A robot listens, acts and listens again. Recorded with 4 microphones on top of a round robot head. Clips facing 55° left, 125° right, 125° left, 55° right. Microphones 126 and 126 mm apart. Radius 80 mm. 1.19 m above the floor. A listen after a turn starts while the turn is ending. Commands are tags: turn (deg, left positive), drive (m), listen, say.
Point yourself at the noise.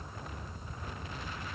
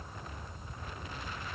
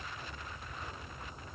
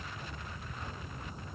<listen/>
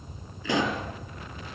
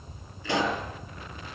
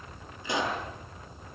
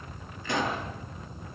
<turn deg="45"/>
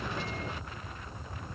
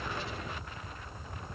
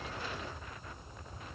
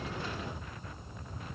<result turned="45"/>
<say>I heard a pop from this way, but can't make it out now.</say>